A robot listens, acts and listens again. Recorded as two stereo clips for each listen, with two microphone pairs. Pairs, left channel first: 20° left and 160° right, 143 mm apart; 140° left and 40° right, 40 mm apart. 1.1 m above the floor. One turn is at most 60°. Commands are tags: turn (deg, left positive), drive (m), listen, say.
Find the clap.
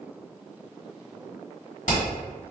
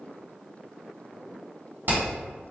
<listen/>
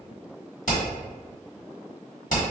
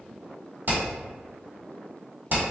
<listen/>
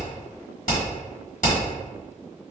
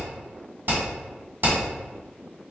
<say>I can't make out a clap, only hammering.</say>